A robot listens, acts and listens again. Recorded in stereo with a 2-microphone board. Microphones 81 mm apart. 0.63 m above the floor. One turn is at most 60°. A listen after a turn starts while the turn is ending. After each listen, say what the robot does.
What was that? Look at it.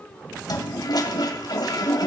Turn 60° left.
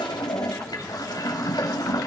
Turn 60° left.
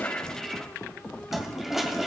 Facing the toilet flushing, 2 to 4 m away.